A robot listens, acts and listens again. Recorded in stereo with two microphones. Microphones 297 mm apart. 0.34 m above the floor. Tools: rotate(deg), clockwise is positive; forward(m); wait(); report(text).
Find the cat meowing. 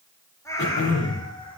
rotate(-15)
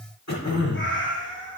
rotate(-40)
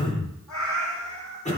rotate(-95)
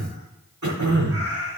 rotate(35)
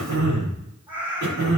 report("Found it: a cat meowing, straight ahead, over 4 m away.")